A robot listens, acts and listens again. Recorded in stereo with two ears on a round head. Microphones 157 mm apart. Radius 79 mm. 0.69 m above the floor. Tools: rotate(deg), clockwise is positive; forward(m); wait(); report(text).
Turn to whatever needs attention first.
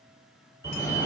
rotate(30)
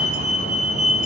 rotate(130)
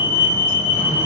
rotate(-15)
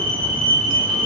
report("Facing the fire alarm, 2 to 4 m away.")